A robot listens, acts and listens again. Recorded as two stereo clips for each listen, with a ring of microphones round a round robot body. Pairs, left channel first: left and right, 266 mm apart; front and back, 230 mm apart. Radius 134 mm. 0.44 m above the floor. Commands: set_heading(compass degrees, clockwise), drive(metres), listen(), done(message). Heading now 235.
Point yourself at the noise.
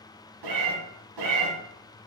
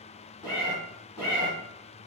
set_heading(315)
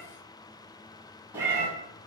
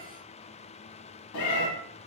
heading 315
set_heading(325)
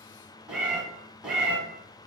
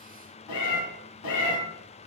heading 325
done("Facing the cat meowing, under 1 m away.")